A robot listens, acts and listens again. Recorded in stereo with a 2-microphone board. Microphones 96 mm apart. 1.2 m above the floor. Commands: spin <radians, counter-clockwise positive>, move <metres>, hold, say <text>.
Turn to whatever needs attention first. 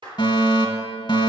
spin 0.79
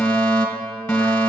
spin 0.17
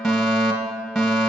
say Facing the fire alarm.